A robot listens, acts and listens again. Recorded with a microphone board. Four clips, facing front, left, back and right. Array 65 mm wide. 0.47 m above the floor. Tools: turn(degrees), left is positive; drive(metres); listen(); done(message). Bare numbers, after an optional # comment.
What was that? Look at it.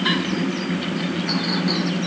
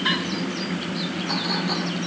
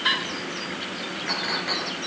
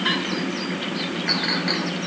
# The clink: 105° right.
turn(-105)
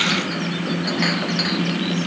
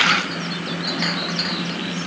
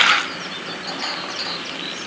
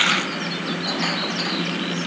# The clink is now 25° left.
turn(25)
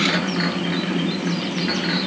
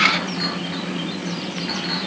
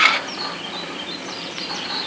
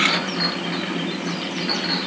# The clink is now 10° right.
turn(-10)
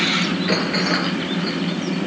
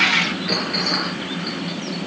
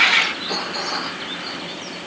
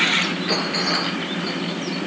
done("Facing the clink, over 4 m away.")